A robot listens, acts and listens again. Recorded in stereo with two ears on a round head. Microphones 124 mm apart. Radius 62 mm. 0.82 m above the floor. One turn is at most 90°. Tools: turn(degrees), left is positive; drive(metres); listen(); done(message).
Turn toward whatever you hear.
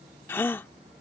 turn(degrees=15)
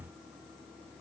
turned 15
listen()
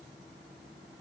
done("I heard a gasp, but can't make it out now. It was about straight ahead or 150° left.")